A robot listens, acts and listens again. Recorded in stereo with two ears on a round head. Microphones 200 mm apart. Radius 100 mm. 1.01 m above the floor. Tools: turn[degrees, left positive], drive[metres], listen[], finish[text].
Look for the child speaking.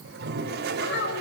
Thought: The child speaking: about 55° left or 125° left.
Action: turn[55]
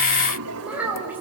Thought: So it is at 10° right.
Action: turn[-10]
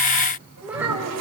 Thought: The child speaking is now 10° right.
Action: turn[-10]
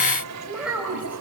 Action: finish[Facing the child speaking, over 4 m away.]